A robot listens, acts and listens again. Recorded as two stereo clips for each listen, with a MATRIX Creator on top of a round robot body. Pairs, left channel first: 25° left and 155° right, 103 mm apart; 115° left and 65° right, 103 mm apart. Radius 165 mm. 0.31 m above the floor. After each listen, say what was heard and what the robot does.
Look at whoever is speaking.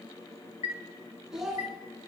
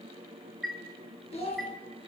The child speaking: 120° left. Turn 120° left.
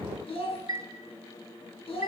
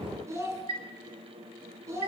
Found it: a child speaking, straight ahead, over 4 m away.